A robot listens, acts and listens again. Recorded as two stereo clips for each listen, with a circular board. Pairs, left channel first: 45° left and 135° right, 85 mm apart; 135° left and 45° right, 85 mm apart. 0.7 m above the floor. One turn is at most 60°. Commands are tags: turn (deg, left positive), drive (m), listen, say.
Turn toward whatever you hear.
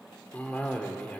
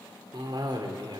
<turn deg="-25"/>
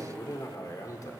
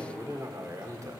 <say>Found it: a cough, straight ahead, 1 to 2 m away.</say>